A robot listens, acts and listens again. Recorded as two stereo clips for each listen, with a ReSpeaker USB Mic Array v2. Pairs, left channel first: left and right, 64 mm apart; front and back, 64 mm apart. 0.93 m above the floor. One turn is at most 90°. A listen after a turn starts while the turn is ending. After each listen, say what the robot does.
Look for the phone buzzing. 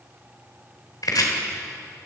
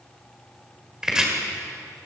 Keep listening.
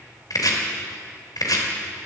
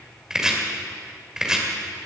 Keep listening.
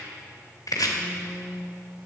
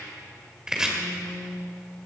Turn 15° right.
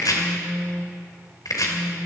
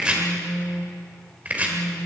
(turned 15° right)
Facing the phone buzzing.